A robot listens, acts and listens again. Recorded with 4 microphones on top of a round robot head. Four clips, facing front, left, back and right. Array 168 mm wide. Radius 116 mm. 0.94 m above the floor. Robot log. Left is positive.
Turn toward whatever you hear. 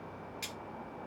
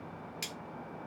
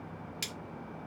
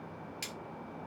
note: The cutlery clinking: straight behind.
cmd yaw +180
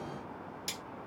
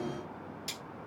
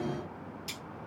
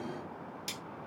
note: The cutlery clinking is now 35° right.
cmd yaw -35
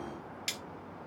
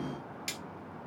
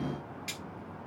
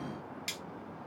end: Facing the cutlery clinking.